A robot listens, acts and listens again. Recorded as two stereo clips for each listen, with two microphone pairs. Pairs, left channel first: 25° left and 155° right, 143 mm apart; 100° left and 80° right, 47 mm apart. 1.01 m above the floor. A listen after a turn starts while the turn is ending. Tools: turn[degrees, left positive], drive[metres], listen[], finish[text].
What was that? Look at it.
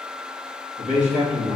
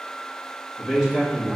Thought: The man speaking: 160° right.
Action: turn[-160]
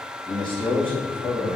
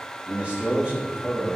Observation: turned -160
Thought: The man speaking is now 20° right.
Action: turn[-20]
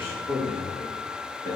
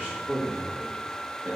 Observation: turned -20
Action: finish[Found it: a man speaking, straight ahead.]